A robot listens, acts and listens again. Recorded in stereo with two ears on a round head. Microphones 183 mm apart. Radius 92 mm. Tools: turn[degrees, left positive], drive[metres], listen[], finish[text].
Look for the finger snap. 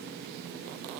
Action: listen[]
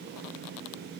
Action: listen[]
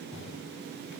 Action: finish[I can't make out a finger snap to turn to.]